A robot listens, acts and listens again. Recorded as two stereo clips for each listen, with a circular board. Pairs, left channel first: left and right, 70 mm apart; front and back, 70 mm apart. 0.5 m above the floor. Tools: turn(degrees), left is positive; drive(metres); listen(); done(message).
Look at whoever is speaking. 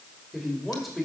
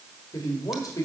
done("Found it: a man speaking, straight ahead, 2 to 4 m away.")